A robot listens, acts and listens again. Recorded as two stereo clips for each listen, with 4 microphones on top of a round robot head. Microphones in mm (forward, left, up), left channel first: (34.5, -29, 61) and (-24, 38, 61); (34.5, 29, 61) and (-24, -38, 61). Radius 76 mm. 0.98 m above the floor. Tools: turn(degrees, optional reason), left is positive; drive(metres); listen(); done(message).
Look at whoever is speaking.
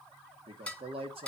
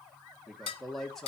turn(degrees=135, reason="The man speaking: 135° left.")
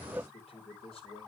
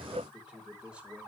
turn(degrees=-55, reason="The man speaking is now 55° right.")
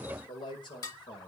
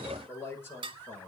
turn(degrees=-15, reason="The man speaking is now 15° right.")
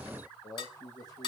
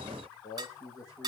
done("Facing the man speaking, over 4 m away.")